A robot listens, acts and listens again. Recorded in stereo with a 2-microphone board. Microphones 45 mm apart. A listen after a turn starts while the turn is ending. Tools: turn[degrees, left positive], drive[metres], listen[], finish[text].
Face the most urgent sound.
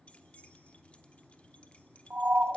Thought: The siren: about 35° right or 145° right.
Action: turn[-35]
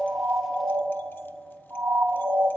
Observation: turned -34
Thought: So it is at 105° right.
Action: turn[-105]
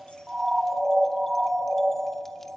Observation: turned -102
Action: finish[Facing the siren.]